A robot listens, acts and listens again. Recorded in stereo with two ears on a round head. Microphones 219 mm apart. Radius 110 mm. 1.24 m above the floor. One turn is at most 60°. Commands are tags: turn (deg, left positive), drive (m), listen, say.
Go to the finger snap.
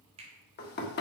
<turn deg="-25"/>
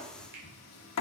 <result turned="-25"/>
<listen/>
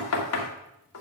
<listen/>
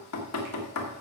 <say>I heard a finger snap, but can't make it out now. It was about straight ahead or 130° right. I did not reach it.</say>